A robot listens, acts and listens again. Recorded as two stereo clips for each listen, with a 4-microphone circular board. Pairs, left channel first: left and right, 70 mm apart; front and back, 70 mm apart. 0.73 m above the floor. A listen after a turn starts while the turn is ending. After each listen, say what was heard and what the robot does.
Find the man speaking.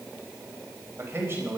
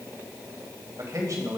The man speaking: 145° right. Turn 145° right.
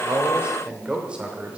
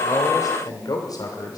The man speaking is now 20° right. Turn 20° right.
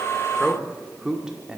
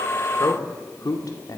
The man speaking is now 15° right. Turn 15° right.
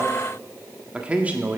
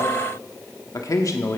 The man speaking is now 30° right. Turn 30° right.
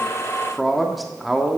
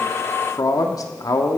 Facing the man speaking, 1 to 2 m away.